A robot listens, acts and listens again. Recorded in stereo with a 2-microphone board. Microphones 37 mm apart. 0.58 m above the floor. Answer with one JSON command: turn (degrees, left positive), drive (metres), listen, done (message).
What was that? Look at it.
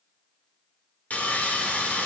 {"turn": 45}
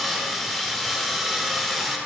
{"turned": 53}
{"done": "Facing the sawing, 1 to 2 m away."}